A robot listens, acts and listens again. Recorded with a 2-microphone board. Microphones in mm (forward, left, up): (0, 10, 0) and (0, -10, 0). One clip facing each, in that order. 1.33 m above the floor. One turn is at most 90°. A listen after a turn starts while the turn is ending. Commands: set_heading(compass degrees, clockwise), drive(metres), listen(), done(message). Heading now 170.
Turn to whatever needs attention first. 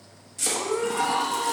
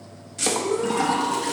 set_heading(100)
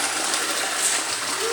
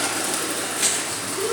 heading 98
set_heading(58)
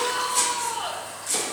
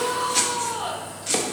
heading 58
done("Found it: a shout, straight ahead, 2 to 4 m away.")